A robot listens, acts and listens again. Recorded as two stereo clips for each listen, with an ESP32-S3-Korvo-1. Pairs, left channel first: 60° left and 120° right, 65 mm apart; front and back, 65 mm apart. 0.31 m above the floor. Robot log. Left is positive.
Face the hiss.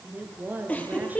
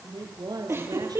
cmd idle
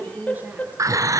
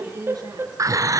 note: The hiss: 150° right.
cmd yaw -150
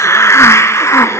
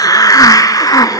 note: The hiss is now 20° left.
cmd yaw +20
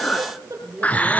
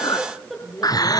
end: Found it: a hiss, straight ahead.